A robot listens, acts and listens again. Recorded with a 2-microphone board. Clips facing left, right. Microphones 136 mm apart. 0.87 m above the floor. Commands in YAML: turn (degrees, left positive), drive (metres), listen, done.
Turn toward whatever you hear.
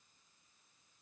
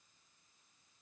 listen: true
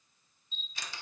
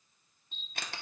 turn: -60
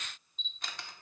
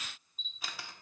done: "Facing the camera shutter, under 1 m away."